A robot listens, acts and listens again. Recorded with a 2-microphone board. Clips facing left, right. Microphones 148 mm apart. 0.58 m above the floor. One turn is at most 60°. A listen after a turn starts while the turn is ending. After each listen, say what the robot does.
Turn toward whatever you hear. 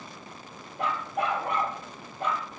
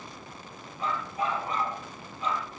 Turn 55° left.
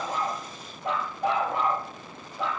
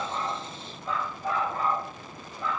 Turn 60° left.
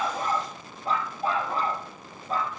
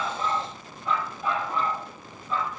Turn 40° left.
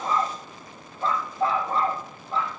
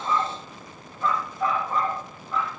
Turn 30° left.
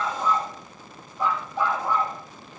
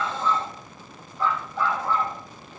Turn 15° left.
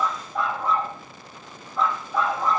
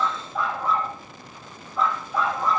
Found it: a dog barking, straight ahead.